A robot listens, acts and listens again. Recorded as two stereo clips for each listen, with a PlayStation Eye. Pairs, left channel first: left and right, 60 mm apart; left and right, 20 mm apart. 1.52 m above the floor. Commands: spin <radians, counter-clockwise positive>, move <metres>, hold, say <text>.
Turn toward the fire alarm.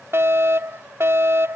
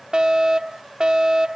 spin -0.79
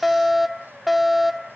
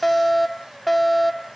say Found it: a fire alarm, straight ahead.